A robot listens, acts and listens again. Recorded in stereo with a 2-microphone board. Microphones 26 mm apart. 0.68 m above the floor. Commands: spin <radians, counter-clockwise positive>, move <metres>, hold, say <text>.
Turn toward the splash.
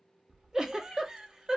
spin -1.05
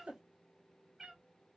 hold
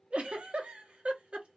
say I heard a splash, but can't make it out now. It was about straight ahead or 60° right.